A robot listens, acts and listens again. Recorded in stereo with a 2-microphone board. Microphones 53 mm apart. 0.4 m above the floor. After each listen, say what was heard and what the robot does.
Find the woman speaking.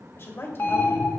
The woman speaking: about 60° left or 120° left. Turn 60° left.
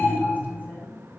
Keep listening.
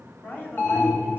So it is at 45° left. Turn 45° left.
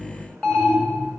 Keep listening.
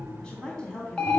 The woman speaking is now 20° left. Turn 20° left.
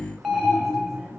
Keep listening.
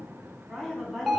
Found it: a woman speaking, straight ahead.